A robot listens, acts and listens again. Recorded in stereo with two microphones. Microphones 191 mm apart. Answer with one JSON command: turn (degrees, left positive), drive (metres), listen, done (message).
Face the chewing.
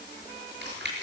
{"turn": -60}
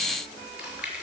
{"done": "Facing the chewing, over 4 m away."}